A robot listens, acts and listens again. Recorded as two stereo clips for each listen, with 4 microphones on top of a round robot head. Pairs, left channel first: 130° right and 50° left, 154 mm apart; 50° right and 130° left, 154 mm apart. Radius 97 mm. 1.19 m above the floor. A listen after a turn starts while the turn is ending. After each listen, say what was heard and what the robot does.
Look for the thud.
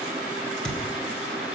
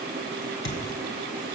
The thud: 45° right. Turn 45° right.
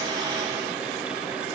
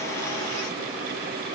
Facing where the thud came from. I can't hear it now.